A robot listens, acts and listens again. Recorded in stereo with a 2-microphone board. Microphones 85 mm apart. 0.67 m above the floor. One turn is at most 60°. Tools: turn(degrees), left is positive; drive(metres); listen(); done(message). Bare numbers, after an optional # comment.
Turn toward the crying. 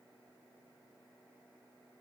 listen()
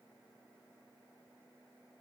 listen()
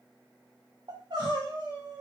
# The crying: about 60° right or 120° right.
turn(-60)
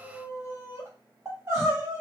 # So it is at 35° right.
turn(-35)
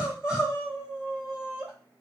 done("Facing the crying, 2 to 4 m away.")